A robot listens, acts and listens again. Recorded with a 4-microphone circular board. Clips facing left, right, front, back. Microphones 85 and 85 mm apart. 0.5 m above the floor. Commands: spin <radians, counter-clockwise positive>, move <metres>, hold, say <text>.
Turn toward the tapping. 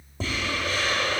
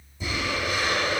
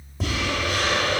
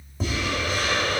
spin 1.57
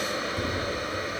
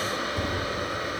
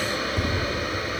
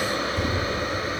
spin -0.35
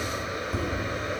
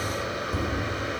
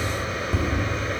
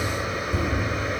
say Facing the tapping, 1 to 2 m away.